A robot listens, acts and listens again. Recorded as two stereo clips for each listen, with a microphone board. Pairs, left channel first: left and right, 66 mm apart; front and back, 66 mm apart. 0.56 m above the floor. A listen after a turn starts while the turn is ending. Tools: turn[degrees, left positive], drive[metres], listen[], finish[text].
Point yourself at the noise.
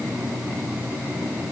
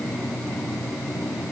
Action: listen[]
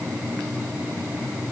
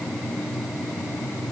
Action: listen[]
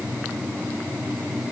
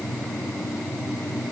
Action: finish[I can't make out anything to turn to.]